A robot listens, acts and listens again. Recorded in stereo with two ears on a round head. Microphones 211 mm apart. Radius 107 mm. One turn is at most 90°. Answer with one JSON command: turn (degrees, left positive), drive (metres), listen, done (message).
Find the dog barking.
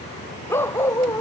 {"turn": 30}
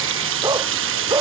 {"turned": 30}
{"turn": -15}
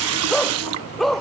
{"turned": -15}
{"done": "Facing the dog barking."}